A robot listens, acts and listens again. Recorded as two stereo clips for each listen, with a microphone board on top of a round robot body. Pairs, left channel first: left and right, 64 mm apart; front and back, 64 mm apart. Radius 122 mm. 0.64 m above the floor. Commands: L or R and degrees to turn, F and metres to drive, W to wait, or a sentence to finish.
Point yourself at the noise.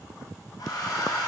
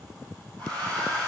L70
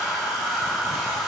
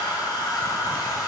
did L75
Found it: a hair dryer, straight ahead, over 4 m away.